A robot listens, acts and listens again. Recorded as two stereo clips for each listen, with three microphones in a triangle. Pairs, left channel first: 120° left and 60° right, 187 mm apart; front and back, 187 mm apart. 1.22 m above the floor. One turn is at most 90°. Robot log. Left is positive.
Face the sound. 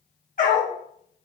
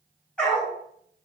note: The dog barking: 80° left.
cmd yaw +80
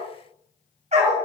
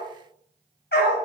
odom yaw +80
note: The dog barking is now 10° right.
cmd yaw -10
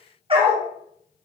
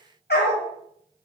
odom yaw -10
end: Found it: a dog barking, straight ahead, 1 to 2 m away.